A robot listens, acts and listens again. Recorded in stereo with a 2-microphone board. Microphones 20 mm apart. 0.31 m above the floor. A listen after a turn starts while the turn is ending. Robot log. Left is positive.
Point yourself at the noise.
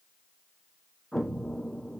cmd yaw +30
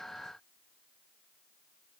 cmd idle
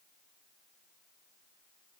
end: I heard an explosion, but can't make it out now. It was about 20° right or 140° left.